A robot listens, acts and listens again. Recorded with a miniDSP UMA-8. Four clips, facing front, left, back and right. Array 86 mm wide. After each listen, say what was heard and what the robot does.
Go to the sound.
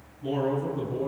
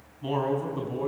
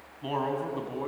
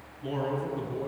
The man speaking: 145° left. Turn 145° left.
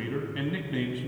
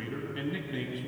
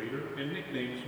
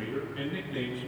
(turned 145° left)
The man speaking is now 10° left. Turn 10° left.
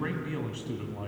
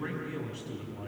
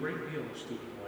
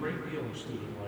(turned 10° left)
Drive 1.0 m forward.
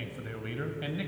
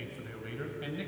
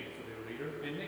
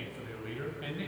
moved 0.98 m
Drive 1.0 m forward.
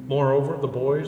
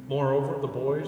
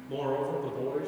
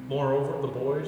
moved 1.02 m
Drive 1.0 m forward.
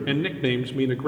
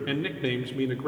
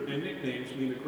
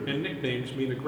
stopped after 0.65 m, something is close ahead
The man speaking is now 10° left. Turn 10° left.
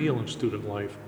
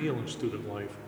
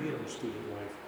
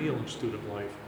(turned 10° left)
Arrived at the man speaking, straight ahead.